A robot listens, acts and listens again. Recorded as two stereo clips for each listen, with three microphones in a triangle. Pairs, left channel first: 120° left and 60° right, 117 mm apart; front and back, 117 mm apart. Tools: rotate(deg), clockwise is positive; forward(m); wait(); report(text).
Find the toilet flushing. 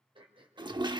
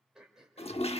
rotate(15)
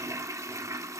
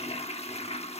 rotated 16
report("Found it: a toilet flushing, straight ahead, under 1 m away.")